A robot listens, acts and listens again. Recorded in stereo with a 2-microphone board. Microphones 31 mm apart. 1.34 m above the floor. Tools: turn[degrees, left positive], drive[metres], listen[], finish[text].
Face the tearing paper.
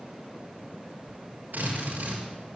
Thought: The tearing paper: about 45° right or 135° right.
Action: turn[-45]
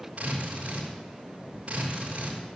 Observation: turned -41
Thought: So it is at 90° right.
Action: turn[-90]
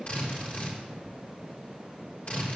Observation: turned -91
Action: finish[Facing the tearing paper.]